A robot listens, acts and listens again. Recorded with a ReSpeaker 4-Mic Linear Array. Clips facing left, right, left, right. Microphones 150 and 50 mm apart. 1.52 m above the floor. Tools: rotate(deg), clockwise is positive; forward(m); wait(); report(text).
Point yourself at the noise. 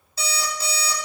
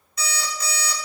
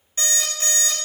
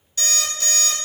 rotate(-35)
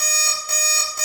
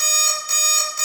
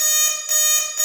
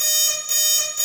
rotate(-110)
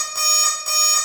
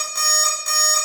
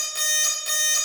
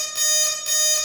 report("Facing the alarm clock, 1 to 2 m away.")